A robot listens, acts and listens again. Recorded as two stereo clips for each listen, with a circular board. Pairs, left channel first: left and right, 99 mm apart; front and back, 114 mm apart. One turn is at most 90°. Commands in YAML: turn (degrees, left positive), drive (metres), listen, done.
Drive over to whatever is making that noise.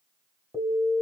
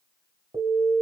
turn: -90
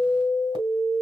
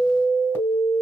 turn: -65
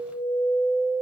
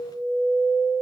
drive: 1.0
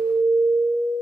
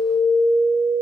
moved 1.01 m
turn: -25
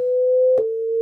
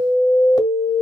drive: 1.0
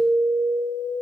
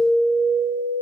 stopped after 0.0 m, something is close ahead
done: "I am next to the alarm."